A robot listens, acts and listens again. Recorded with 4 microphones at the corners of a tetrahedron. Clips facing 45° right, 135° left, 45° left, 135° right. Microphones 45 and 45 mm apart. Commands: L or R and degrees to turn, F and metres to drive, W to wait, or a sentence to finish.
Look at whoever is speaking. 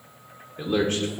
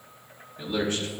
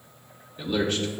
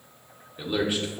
R55
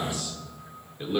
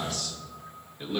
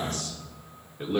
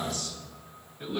L25
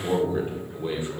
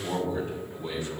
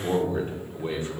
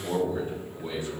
L15
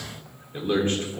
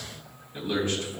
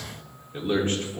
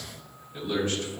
Found it: a man speaking, straight ahead, 1 to 2 m away.